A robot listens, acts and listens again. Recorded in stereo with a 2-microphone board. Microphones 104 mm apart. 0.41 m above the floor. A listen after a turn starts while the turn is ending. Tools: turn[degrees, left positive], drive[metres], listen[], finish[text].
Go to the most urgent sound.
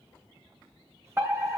Thought: The fire alarm: about 20° right or 160° right.
Action: turn[-20]
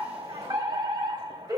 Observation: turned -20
Thought: So it is at 135° right.
Action: turn[-135]
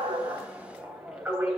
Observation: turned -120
Thought: The fire alarm is now 10° right.
Action: turn[-10]
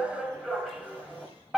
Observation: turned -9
Action: drive[1.0]
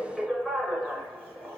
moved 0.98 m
Action: drive[1.0]
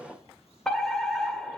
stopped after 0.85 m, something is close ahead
Thought: The fire alarm is now 10° left.
Action: turn[10]
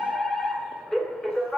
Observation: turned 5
Action: finish[Arrived at the fire alarm, straight ahead.]